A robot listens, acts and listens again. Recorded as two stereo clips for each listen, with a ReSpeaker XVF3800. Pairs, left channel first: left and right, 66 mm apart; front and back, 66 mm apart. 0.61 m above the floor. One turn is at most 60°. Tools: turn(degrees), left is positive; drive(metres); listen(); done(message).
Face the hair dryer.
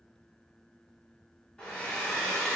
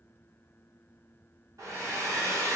turn(degrees=60)
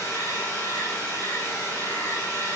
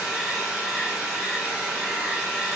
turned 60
turn(degrees=60)
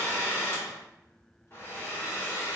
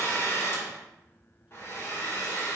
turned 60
turn(degrees=40)
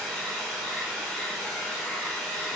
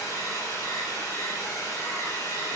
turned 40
done("Found it: a hair dryer, straight ahead, 1 to 2 m away.")